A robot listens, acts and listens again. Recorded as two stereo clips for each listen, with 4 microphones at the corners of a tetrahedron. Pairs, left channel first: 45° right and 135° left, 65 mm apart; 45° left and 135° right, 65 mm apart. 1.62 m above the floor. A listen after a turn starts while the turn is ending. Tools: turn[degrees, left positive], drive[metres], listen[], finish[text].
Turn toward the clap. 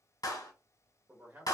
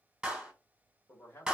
Thought: The clap: 60° right.
Action: turn[-60]
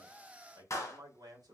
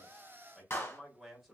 Action: finish[Facing the clap.]